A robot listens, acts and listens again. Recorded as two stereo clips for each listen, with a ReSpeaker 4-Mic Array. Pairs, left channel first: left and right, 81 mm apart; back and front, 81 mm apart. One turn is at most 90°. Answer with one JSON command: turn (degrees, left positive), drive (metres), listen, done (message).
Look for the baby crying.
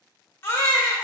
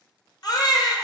{"turn": 90}
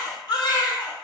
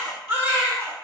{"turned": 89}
{"turn": 60}
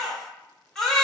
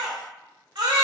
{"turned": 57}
{"done": "Facing the baby crying."}